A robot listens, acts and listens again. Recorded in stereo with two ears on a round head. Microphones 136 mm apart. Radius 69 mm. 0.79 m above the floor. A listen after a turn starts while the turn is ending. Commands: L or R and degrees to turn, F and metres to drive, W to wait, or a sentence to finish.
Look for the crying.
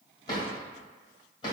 W
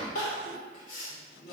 L55
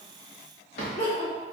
L50
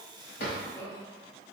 L15
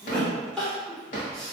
Found it: crying, straight ahead.